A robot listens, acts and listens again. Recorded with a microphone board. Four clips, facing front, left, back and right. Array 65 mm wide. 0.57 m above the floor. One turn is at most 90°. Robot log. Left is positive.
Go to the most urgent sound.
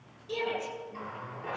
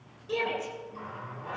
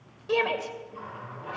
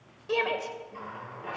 note: The shout: 150° right.
cmd yaw -90
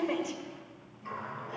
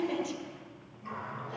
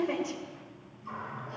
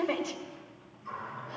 note: The shout is now 85° right.
cmd yaw -85
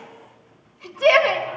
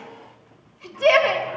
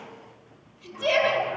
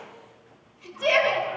note: The shout is now 30° left.
cmd yaw +30
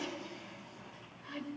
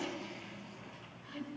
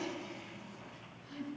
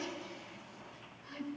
cmd idle
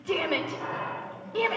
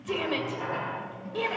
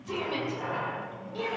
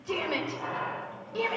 cmd fwd 1.0
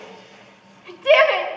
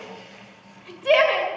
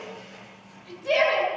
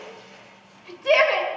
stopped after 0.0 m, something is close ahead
end: Blocked. The shout is further on, straight ahead.